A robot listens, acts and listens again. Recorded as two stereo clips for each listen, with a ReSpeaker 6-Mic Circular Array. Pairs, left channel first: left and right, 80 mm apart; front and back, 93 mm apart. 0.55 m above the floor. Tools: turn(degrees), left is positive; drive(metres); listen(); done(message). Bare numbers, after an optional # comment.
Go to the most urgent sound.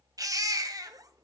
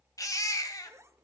# The baby crying: 50° right.
turn(-50)
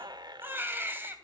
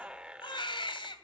# The baby crying is now 25° right.
turn(-25)
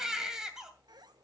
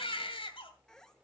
# The baby crying is now 10° right.
turn(-10)
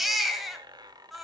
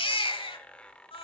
drive(1.0)
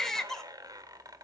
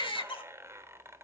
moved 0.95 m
drive(1.0)
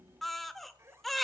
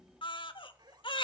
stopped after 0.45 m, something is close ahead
done("Arrived at the baby crying, straight ahead.")